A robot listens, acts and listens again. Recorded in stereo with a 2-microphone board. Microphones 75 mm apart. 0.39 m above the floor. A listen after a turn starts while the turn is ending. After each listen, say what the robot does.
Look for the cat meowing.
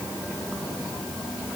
Keep listening.
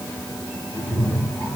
Turn 15° right.
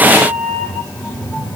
Turn 30° left.
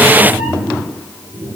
Turn 20° right.
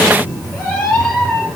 Found it: a cat meowing, straight ahead, over 4 m away.